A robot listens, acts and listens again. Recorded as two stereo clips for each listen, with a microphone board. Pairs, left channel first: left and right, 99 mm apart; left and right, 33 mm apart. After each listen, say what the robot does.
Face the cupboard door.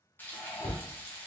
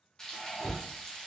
Turn 90° left.
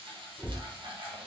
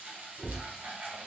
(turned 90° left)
Turn 15° right.
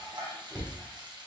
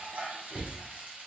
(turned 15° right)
Facing the cupboard door.